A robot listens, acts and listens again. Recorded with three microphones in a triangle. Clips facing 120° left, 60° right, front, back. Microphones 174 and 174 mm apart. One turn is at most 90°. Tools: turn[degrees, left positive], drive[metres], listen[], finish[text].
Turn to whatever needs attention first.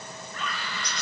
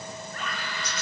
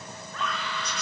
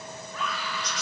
Thought: The scream: 100° right.
Action: turn[-90]
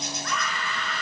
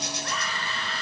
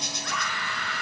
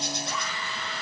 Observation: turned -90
Action: finish[Found it: a scream, straight ahead.]